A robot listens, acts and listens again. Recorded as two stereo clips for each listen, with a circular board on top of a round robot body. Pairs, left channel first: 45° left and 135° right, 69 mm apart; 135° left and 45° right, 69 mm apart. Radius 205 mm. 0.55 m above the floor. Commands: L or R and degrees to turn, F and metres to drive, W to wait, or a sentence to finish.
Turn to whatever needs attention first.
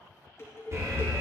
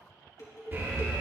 R100
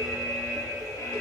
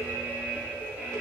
L20
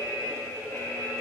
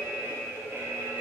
Facing the alarm, 2 to 4 m away.